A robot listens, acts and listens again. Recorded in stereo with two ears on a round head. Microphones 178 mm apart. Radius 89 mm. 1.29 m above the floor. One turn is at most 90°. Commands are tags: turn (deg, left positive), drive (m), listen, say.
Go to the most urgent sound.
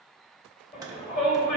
<turn deg="40"/>
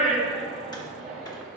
<drive m="1.0"/>
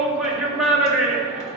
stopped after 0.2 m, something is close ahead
<say>Something is in my way. I am facing the shout but have not reached it.</say>